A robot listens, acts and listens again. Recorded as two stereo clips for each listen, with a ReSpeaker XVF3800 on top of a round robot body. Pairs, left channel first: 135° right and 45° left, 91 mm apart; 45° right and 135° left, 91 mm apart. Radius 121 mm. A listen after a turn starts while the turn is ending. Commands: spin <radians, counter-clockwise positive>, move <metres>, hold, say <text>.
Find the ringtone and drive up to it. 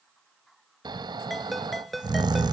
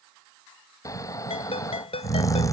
spin -0.79
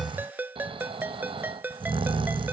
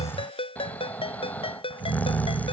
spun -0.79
spin -0.44
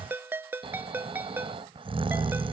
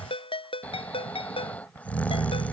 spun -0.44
spin -0.44
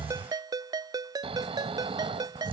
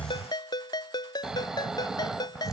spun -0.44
move 1.0
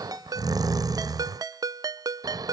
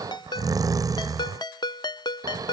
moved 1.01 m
move 1.0
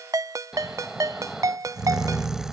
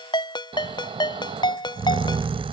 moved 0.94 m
spin -0.17
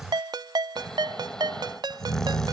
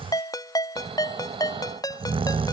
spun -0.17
move 1.0
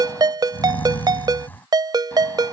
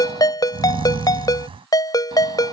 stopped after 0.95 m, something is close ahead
say I am next to the ringtone.